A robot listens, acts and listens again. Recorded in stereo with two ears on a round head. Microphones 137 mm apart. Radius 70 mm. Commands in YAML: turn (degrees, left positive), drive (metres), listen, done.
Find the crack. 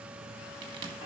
turn: -25
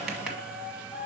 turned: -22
listen: true
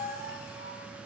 done: "I heard a crack, but can't make it out now. It was about 5° right or 130° right."